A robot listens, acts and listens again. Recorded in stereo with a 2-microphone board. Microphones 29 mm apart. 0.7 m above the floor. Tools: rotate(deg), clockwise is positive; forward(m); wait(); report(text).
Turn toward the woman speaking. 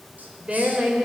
rotate(45)
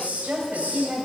rotate(100)
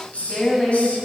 rotate(-15)
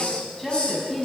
report("Facing the woman speaking.")